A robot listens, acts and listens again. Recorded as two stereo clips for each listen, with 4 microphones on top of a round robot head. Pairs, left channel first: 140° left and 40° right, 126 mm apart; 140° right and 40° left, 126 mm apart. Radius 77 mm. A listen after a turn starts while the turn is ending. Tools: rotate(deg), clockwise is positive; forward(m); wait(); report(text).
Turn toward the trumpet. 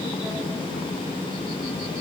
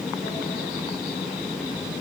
wait()
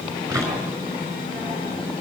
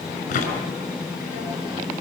wait()
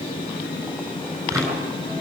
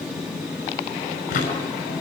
report("I can't make out a trumpet, only a drawer.")